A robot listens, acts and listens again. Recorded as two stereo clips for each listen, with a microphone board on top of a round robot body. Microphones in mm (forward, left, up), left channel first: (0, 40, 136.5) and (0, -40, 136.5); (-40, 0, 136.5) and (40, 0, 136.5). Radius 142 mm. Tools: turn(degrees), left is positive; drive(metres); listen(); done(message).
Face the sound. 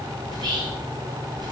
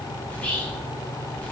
turn(degrees=-105)
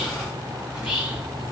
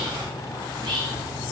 turn(degrees=-10)
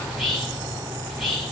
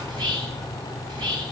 done("Found it: whispering, straight ahead, 1 to 2 m away.")